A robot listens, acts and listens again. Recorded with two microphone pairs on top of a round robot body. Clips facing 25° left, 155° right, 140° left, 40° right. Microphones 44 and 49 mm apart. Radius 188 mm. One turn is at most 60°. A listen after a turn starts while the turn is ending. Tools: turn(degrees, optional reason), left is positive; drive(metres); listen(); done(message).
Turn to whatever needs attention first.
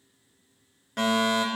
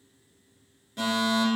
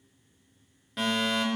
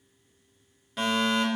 turn(degrees=45, reason="The fire alarm: 45° left.")
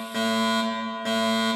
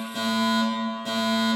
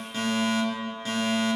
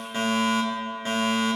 turn(degrees=10, reason="The fire alarm is now 10° left.")
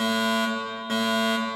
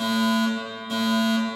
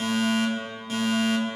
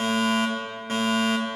done("Found it: a fire alarm, straight ahead, over 4 m away.")